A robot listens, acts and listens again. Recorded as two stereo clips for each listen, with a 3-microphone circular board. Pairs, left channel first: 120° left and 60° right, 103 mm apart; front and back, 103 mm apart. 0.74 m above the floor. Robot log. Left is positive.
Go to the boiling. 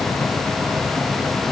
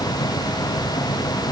cmd idle
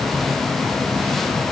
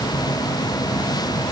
cmd idle
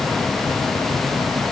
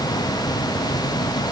end: I can't make out boiling to turn to.